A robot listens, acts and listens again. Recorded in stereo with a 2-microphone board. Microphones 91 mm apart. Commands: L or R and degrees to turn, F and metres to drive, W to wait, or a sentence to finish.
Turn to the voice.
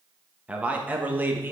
R25
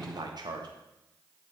R130
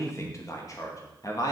L40
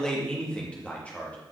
L15
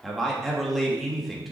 Found it: a man speaking, straight ahead.